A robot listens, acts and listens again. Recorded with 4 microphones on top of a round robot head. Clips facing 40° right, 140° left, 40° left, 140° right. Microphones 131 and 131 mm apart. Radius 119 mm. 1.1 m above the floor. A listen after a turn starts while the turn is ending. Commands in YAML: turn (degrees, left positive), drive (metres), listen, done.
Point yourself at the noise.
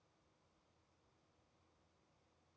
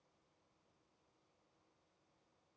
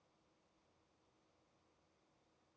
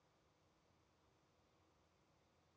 listen: true
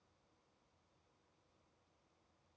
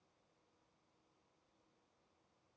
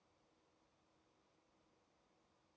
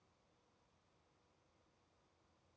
listen: true
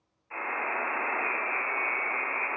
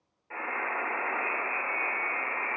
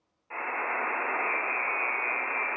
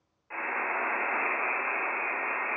turn: 110
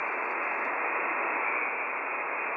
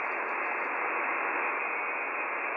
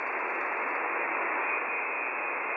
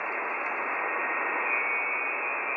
turn: 25
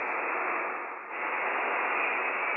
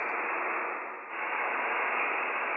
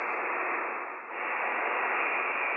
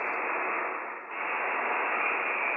turn: 10
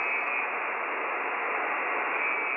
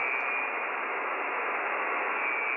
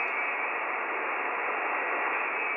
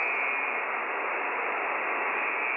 done: "Facing the buzzer."